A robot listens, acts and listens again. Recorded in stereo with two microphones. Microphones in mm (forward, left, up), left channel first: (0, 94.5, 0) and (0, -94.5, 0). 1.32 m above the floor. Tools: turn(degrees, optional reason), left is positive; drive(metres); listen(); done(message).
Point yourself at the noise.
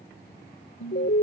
turn(degrees=90)
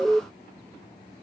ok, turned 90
done("Found it: an alarm, straight ahead.")